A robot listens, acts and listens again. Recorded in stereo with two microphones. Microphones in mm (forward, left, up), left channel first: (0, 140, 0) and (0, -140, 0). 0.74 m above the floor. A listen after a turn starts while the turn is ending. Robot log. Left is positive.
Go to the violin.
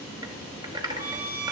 note: The violin: about 50° left or 130° left.
cmd yaw +50
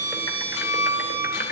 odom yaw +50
note: So it is at 85° left.
cmd yaw +85
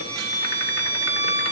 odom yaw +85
cmd fwd 1.0
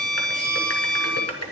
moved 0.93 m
cmd fwd 1.0
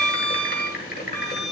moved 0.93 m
cmd fwd 1.0
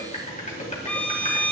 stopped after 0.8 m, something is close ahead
end: Arrived at the violin, straight ahead.